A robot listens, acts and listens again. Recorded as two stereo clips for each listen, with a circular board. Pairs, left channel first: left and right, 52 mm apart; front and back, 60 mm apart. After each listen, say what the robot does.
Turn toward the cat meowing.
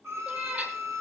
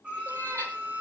Turn 150° right.
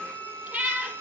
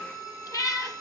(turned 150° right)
Turn 30° right.
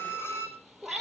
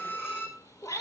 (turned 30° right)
Facing the cat meowing.